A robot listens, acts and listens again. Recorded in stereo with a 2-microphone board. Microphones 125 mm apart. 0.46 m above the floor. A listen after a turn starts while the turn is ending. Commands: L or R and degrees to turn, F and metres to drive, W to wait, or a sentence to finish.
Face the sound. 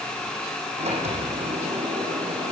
R60
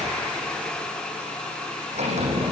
R65
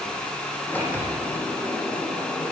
L15
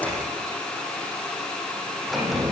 Facing the sliding door.